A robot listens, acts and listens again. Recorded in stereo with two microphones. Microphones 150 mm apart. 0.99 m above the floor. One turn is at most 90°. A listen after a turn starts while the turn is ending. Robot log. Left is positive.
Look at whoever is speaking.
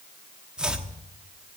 cmd idle
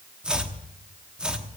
cmd idle
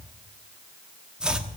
end: I can't make out anyone speaking to turn to.